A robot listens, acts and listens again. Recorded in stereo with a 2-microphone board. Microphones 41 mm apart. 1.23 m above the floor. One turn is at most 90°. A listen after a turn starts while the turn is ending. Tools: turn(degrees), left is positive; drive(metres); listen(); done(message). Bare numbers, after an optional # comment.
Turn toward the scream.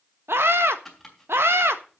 turn(-90)
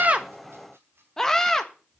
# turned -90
# So it is at 10° left.
turn(10)
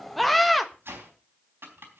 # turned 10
done("Found it: a scream, straight ahead.")